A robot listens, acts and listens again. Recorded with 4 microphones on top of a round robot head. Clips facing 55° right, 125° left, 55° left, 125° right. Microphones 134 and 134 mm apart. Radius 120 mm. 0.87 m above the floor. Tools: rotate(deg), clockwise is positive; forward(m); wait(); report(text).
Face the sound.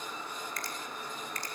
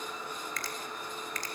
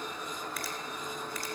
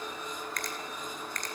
rotate(-140)
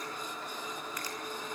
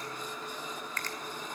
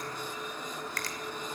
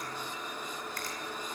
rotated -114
rotate(-25)
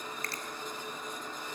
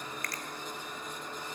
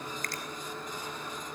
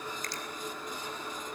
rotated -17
rotate(-10)
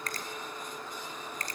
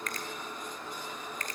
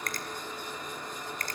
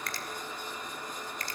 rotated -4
report("Found it: a finger snap, straight ahead, 2 to 4 m away.")